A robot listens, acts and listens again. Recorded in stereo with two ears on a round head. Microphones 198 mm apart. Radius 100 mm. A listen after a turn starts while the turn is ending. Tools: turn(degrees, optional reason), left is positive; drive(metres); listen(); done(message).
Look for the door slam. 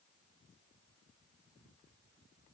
listen()
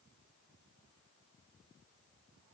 listen()
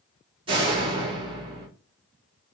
turn(degrees=-25, reason="The door slam: about 25° right or 155° right.")
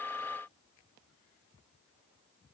listen()
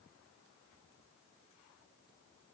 done("I heard a door slam, but can't make it out now. It was about straight ahead or 130° right.")